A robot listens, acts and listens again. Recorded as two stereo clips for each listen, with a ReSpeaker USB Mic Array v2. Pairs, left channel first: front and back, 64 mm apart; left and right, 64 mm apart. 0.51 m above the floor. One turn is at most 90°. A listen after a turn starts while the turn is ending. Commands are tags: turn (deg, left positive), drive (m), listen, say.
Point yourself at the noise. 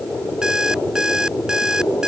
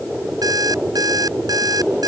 <turn deg="-90"/>
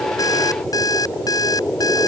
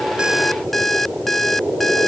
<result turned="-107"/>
<say>Facing the alarm clock.</say>